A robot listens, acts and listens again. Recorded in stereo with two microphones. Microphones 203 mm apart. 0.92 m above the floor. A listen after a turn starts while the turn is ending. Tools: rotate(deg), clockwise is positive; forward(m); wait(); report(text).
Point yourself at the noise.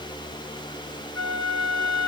rotate(90)
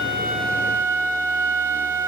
rotate(10)
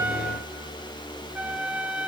report("Facing the flute, 1 to 2 m away.")